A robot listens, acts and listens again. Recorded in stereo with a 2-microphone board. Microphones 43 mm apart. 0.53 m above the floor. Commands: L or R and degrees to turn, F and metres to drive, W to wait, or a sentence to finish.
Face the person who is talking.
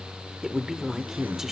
R30
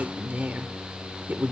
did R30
R135
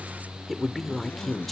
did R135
Found it: a woman speaking, straight ahead, 1 to 2 m away.